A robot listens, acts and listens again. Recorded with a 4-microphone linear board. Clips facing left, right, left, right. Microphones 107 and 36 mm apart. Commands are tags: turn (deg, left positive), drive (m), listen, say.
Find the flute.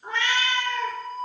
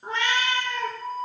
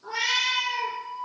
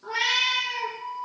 <turn deg="45"/>
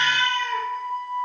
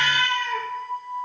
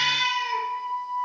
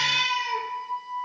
<turn deg="90"/>
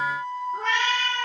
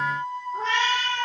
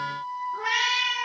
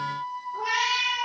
<say>Found it: a flute, straight ahead.</say>